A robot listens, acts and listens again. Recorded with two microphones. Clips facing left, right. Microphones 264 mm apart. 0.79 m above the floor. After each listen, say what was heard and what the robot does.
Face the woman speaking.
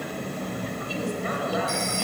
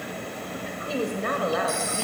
The woman speaking: about 65° right or 115° right. Turn 65° right.
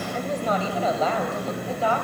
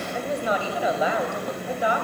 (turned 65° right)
So it is at 15° right. Turn 15° right.
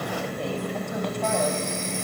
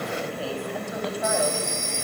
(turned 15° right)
Keep listening.
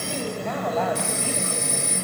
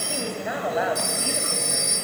The woman speaking is now 10° right. Turn 10° right.
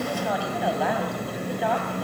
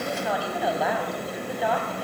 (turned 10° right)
Facing the woman speaking, over 4 m away.